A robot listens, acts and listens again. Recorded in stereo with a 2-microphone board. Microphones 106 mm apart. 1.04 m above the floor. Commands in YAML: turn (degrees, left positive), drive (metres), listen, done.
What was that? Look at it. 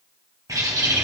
turn: -35
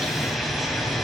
done: "Facing the bird."